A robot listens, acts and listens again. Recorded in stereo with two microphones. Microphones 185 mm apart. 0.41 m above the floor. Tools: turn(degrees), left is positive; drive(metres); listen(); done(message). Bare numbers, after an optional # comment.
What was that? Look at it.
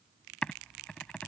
turn(30)
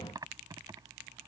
# So it is at 20° right.
turn(-20)
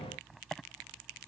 done("Facing the typing on a keyboard.")